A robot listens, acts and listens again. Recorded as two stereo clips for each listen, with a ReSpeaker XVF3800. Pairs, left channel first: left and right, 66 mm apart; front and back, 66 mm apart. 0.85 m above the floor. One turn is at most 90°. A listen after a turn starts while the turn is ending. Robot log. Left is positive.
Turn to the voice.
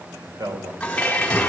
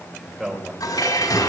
note: The man speaking: 90° right.
cmd yaw -90
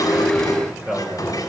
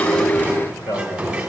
end: Facing the man speaking, over 4 m away.